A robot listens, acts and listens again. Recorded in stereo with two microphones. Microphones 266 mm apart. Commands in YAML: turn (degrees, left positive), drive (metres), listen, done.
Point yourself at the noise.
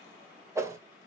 turn: -30
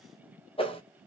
turn: 20
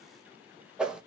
done: "Found it: a whoosh, straight ahead, under 1 m away."